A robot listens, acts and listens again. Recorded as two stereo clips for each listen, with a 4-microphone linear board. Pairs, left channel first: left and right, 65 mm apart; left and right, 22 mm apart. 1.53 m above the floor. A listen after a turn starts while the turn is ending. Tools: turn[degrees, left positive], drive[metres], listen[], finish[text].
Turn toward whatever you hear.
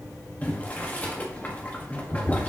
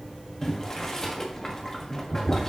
Thought: The boiling: about 25° left or 155° left.
Action: turn[25]
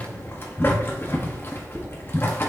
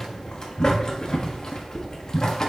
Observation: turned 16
Thought: So it is at 145° left.
Action: turn[145]
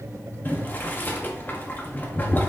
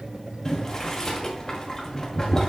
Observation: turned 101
Thought: The boiling is now 35° left.
Action: turn[35]
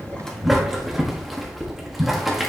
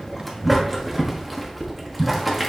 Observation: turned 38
Action: finish[Found it: boiling, straight ahead.]